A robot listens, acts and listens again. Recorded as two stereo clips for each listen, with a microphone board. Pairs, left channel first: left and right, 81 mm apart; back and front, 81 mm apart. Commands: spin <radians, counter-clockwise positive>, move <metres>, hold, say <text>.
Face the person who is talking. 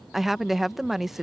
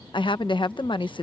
spin 3.14
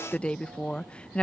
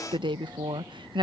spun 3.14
spin 0.26
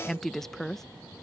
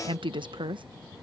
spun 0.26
say Facing the woman speaking.